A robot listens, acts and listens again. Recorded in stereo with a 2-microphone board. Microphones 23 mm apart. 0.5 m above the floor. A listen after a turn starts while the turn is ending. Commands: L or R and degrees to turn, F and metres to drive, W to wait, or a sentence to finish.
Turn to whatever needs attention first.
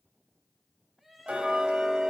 R30
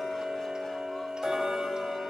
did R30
W
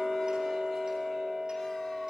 W
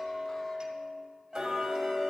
I heard crying, but can't make it out now. It was about 25° left or 145° right.